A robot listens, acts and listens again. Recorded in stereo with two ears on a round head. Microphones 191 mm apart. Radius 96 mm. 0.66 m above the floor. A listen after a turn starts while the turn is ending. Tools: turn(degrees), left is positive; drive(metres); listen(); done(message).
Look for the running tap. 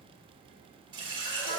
turn(degrees=-25)
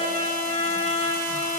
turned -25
listen()
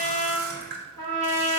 turn(degrees=-130)
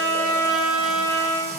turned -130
listen()
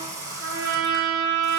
turn(degrees=-15)
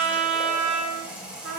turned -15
done("Found it: a running tap, straight ahead.")